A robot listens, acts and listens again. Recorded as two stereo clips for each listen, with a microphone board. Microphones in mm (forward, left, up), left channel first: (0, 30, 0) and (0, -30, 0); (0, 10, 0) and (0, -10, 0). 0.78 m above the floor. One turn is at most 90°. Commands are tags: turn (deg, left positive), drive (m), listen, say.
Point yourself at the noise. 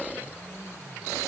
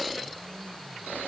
<listen/>
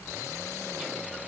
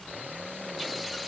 <listen/>
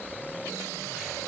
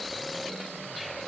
<say>I can't make out anything to turn to.</say>